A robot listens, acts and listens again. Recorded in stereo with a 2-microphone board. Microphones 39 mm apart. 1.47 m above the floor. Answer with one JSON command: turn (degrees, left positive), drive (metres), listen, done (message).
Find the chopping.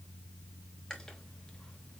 {"listen": true}
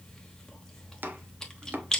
{"turn": -55}
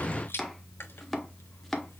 {"done": "Found it: chopping, straight ahead, under 1 m away."}